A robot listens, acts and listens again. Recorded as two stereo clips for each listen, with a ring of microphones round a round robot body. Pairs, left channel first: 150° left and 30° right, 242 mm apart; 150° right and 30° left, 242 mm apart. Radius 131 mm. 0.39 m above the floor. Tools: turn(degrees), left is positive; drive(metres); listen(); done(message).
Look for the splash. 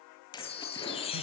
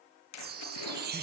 turn(degrees=-135)
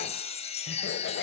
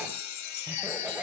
done("I heard a splash from this way, but can't make it out now.")